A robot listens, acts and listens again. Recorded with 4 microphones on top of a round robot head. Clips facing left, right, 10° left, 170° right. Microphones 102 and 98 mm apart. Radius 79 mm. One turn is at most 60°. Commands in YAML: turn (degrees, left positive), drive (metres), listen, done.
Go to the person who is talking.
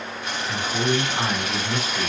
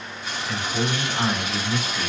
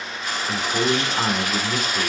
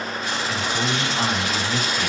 turn: 20
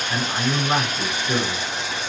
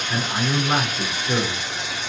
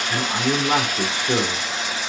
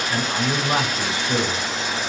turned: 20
drive: 1.0
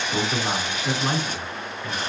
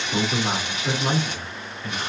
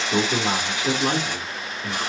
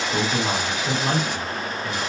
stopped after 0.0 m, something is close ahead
done: "Blocked. The man speaking is further on, straight ahead."